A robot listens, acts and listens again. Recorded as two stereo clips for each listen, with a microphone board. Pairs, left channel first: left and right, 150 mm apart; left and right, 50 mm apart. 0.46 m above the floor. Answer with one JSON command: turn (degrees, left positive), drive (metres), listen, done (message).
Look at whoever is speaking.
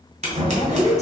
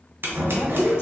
{"turn": 55}
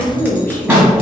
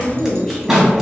{"turn": 15}
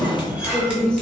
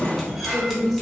{"turn": 10}
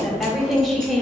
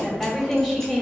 {"done": "Facing the woman speaking, 1 to 2 m away."}